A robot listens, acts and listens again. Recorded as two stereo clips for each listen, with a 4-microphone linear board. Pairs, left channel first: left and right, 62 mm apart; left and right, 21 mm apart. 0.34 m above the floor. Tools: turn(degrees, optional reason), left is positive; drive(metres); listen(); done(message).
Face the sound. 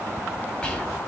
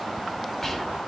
turn(degrees=30)
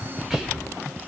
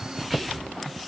turn(degrees=-15, reason="So it is at 15° right.")
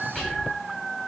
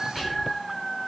done("Found it: whispering, straight ahead, 1 to 2 m away.")